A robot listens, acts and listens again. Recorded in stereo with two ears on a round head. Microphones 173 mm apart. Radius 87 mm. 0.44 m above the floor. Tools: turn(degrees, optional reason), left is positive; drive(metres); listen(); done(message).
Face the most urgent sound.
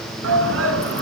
turn(degrees=-75, reason="The shout: about 75° right or 105° right.")
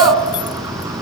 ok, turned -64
turn(degrees=-15, reason="So it is at 15° right.")
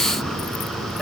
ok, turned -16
done("Found it: a shout, straight ahead.")